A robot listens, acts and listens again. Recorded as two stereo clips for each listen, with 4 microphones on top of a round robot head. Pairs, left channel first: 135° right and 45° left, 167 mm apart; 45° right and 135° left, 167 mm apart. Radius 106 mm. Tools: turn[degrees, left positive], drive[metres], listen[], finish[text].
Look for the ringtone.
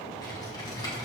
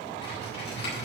Action: listen[]
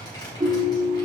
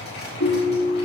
Thought: The ringtone: 25° right.
Action: turn[-25]
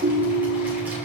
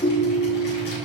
Thought: The ringtone is now 10° left.
Action: turn[10]
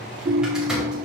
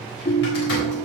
Action: finish[Found it: a ringtone, straight ahead.]